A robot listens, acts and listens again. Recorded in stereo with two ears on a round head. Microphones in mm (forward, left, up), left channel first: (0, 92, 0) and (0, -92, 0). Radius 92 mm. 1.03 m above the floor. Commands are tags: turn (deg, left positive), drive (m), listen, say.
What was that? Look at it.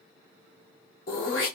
<turn deg="50"/>
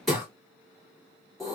<say>Found it: throat clearing, straight ahead, 2 to 4 m away.</say>